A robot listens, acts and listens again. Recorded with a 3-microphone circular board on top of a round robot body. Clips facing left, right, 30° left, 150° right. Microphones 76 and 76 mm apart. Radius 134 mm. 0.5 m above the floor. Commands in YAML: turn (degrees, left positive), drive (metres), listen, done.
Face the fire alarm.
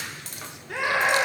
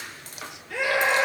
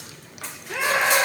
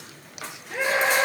listen: true
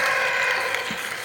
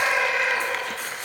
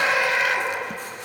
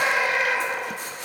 listen: true
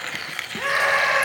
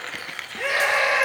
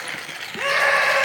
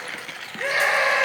done: "I can't make out a fire alarm to turn to."